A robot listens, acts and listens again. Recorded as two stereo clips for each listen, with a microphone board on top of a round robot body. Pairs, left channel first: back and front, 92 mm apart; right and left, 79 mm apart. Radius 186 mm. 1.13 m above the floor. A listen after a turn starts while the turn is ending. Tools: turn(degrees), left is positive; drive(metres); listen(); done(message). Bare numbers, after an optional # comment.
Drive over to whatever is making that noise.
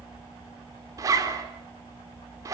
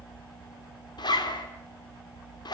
# The zipper: 55° right.
turn(-55)
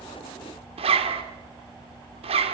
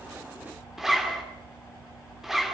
drive(1.0)
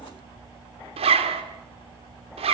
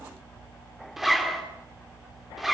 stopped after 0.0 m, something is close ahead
done("Blocked. The zipper is further on, straight ahead.")